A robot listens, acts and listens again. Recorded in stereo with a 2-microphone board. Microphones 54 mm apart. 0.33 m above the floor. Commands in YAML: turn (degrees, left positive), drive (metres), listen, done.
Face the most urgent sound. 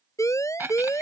turn: 90
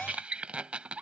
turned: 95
listen: true
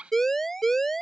done: "Facing the siren."